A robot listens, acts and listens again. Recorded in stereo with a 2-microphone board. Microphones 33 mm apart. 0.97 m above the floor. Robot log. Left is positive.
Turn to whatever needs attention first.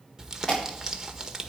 note: The alarm: about 25° left or 155° left.
cmd yaw +25
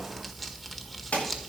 note: So it is at 130° left.
cmd yaw +130
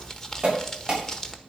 note: The alarm is now 25° right.
cmd yaw -25
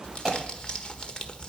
note: The alarm is now 15° right.
cmd yaw -15
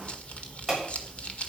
end: Found it: an alarm, straight ahead, over 4 m away.